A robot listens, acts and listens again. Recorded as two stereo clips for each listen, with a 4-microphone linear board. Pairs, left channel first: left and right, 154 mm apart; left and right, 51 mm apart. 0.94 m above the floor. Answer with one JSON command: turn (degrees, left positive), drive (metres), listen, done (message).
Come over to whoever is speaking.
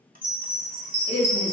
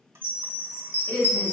{"turn": 40}
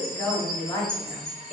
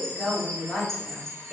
{"drive": 1.0}
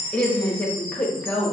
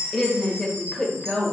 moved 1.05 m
{"turn": 10}
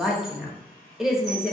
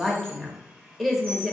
{"drive": 1.0}
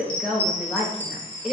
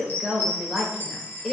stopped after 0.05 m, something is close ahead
{"done": "Arrived at the woman speaking, straight ahead."}